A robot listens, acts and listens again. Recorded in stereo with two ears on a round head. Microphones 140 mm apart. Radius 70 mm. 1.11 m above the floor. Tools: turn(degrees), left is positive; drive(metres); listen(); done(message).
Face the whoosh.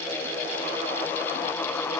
listen()
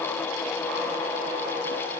listen()
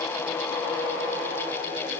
done("I can't make out a whoosh.")